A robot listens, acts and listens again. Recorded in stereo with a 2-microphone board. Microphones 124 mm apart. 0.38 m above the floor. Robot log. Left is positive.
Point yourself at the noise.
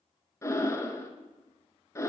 note: The breathing: about 25° left or 155° left.
cmd yaw +25
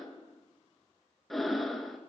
end: Facing the breathing, under 1 m away.